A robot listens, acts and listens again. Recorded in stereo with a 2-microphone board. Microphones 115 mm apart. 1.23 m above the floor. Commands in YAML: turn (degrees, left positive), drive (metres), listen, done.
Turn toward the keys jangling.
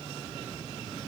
listen: true
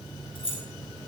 turn: 50
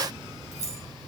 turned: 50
turn: 85
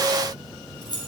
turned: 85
turn: 40
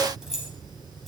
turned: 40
done: "Facing the keys jangling, over 4 m away."